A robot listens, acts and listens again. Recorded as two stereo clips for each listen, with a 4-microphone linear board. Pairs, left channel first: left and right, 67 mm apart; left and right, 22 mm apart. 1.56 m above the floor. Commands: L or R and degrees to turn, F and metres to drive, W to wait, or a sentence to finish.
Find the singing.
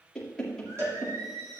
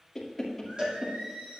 R55
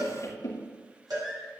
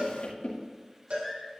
Found it: singing, straight ahead.